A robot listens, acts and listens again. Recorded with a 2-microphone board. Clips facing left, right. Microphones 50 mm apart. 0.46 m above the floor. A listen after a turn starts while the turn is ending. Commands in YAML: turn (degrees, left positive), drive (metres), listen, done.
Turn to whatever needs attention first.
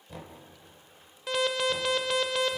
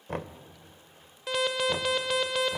turn: 30
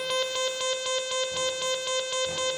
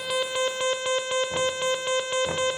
turn: -30
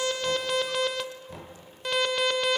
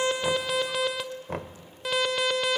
done: "Facing the alarm, under 1 m away."